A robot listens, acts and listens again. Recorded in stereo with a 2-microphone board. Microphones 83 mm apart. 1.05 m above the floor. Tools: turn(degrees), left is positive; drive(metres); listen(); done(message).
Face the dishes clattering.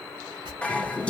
turn(degrees=30)
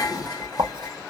turn(degrees=135)
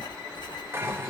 turn(degrees=-30)
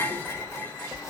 turn(degrees=25)
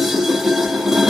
done("Found it: dishes clattering, straight ahead, under 1 m away.")